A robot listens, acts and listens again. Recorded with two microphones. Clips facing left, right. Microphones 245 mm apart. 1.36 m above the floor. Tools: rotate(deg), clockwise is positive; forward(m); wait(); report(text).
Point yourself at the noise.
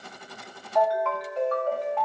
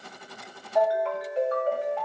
rotate(25)
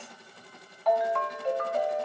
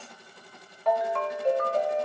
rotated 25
rotate(125)
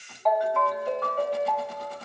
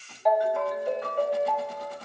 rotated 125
rotate(10)
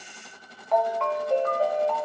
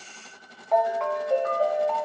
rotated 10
report("Found it: a ringtone, straight ahead.")